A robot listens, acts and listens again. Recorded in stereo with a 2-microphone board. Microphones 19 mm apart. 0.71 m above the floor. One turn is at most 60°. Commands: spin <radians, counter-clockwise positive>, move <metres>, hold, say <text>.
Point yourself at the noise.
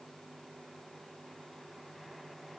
hold
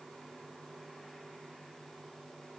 hold
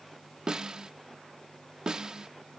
spin -0.61
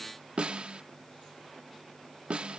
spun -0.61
spin -1.05
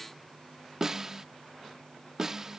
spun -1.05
spin -0.52
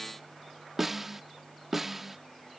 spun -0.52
spin -0.35
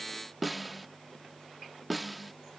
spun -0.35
say Found it: a snare drum, straight ahead.